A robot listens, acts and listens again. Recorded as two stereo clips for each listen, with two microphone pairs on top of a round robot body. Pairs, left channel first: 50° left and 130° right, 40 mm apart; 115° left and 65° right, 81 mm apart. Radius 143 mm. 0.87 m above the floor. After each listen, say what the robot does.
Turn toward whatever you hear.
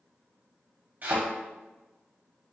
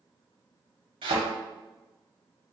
Turn 80° right.
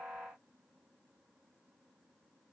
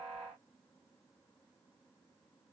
I heard a thud from this way, but can't make it out now.